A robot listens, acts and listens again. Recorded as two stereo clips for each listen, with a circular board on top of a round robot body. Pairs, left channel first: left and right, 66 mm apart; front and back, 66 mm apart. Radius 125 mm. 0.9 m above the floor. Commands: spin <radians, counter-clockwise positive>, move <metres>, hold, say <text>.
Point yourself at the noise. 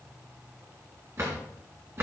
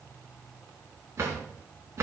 spin -2.36
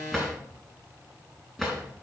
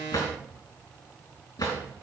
say Found it: a drawer, straight ahead, over 4 m away.